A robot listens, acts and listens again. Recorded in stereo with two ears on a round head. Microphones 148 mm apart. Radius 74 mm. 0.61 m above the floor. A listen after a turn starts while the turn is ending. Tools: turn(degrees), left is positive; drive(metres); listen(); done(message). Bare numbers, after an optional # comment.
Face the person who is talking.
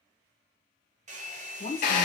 # The woman speaking: about 40° left or 140° left.
turn(40)
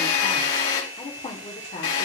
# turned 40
# The woman speaking: about 35° left or 145° left.
turn(35)
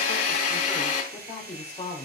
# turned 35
# So it is at 30° left.
turn(30)
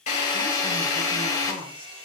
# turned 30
listen()
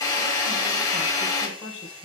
# The woman speaking is now 10° left.
turn(10)
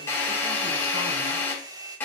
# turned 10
listen()
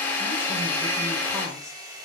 listen()
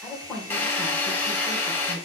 done("Facing the woman speaking.")